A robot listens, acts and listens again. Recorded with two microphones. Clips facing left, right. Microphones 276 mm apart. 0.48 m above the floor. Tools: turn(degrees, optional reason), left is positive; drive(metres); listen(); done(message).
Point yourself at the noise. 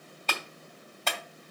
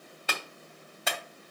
turn(degrees=-30)
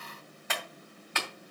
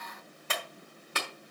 turn(degrees=-140, reason="So it is at 140° right.")
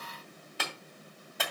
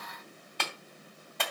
done("Facing the clap, 2 to 4 m away.")